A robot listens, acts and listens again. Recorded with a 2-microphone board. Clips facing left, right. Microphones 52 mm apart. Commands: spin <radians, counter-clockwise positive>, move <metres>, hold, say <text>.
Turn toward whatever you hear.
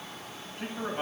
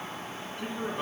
spin 1.05
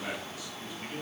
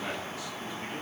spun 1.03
spin 0.17
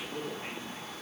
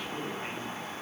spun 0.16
say Facing the man speaking, 2 to 4 m away.